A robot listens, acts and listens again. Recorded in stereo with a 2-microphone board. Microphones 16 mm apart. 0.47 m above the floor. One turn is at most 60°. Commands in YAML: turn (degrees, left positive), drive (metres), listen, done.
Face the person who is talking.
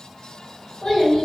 turn: 60
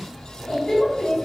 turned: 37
turn: 60
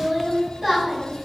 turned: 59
turn: 10
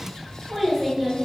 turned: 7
done: "Facing the child speaking."